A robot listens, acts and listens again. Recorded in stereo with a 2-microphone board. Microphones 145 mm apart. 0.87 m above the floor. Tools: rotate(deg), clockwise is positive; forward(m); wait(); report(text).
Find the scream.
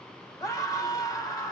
rotate(-25)
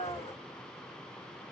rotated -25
rotate(-130)
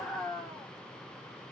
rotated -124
report("Found it: a scream, straight ahead.")